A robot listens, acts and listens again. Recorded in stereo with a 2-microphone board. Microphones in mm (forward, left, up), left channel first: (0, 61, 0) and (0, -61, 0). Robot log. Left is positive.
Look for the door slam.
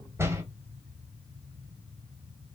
note: The door slam: about 20° right or 160° right.
cmd yaw -20
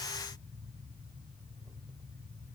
cmd idle
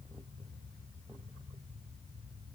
end: I heard a door slam, but can't make it out now. It was about straight ahead or 140° right.